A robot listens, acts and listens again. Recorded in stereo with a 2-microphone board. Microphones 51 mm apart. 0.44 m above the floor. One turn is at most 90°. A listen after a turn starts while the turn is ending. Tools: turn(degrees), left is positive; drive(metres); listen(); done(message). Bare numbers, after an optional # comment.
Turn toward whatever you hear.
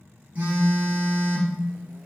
# The phone buzzing: about 35° right or 145° right.
turn(-35)
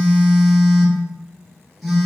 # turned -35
done("Facing the phone buzzing.")